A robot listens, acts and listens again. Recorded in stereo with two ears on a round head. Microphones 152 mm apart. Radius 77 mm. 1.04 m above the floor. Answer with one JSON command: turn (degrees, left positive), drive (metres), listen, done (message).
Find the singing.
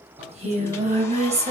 {"turn": -40}
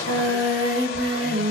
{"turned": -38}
{"turn": -110}
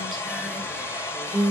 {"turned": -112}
{"done": "Facing the singing."}